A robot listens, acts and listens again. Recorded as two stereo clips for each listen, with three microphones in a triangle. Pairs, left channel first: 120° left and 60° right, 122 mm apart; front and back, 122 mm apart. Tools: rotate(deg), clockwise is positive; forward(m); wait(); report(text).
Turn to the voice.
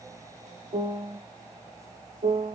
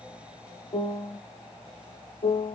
wait()
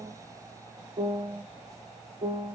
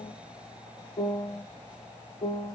wait()
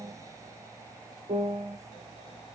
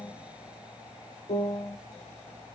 report("I can't make out anyone speaking, only a piano.")